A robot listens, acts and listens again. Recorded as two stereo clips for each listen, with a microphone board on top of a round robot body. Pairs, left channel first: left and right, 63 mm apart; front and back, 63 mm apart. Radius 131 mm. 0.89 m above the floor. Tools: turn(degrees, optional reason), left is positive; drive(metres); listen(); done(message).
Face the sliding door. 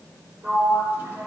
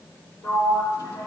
turn(degrees=-35, reason="The sliding door: 35° right.")
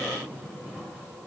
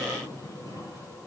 listen()
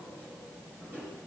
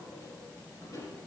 listen()
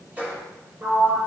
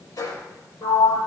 turn(degrees=-25, reason="The sliding door is now 25° right.")
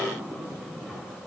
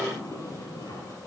turn(degrees=-15, reason="The sliding door is now 15° right.")
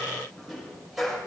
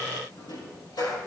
done("Facing the sliding door.")